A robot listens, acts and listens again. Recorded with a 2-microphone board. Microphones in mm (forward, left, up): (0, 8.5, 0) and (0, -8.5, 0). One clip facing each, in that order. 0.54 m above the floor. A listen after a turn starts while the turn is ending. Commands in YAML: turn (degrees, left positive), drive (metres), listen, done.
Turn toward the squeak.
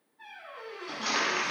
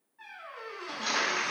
turn: -35
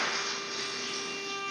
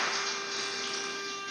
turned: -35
listen: true
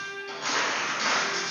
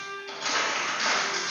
listen: true
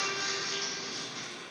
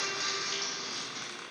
turn: -105
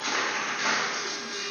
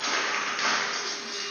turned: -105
listen: true
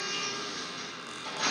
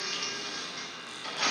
done: "Found it: a squeak, straight ahead."